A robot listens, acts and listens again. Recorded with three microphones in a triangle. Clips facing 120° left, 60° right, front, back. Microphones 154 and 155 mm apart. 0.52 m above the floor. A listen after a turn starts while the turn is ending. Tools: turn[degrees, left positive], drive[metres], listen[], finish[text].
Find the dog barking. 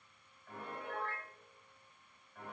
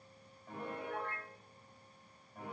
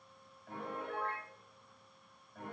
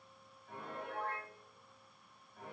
Action: listen[]
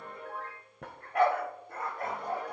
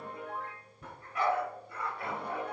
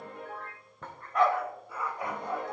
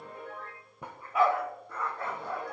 Thought: The dog barking: 70° left.
Action: turn[70]
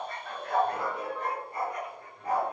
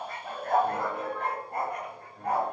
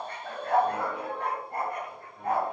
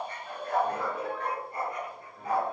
Thought: The dog barking is now 35° right.
Action: turn[-35]
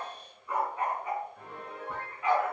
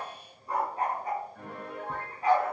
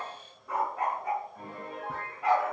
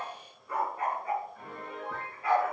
Thought: The dog barking is now 10° right.
Action: turn[-10]
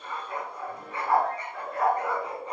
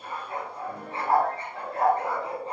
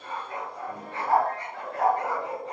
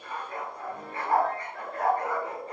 Action: finish[Found it: a dog barking, straight ahead, 2 to 4 m away.]